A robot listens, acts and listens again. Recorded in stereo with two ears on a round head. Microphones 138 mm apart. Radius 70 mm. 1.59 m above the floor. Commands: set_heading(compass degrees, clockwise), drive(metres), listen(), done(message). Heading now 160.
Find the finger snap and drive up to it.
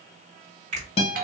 set_heading(205)
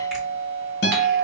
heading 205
listen()
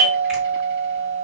listen()
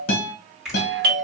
drive(1.0)
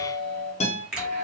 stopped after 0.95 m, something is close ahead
set_heading(215)
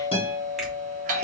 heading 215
listen()
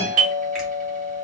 listen()
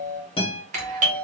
done("Facing where the finger snap came from. I can't hear it now. I did not reach it.")